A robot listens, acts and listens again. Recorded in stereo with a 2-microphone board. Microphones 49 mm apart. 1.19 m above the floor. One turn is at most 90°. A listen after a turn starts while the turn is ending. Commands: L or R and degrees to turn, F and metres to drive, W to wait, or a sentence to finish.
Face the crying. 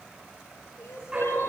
L60
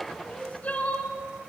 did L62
L35
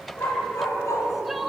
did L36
Facing the crying.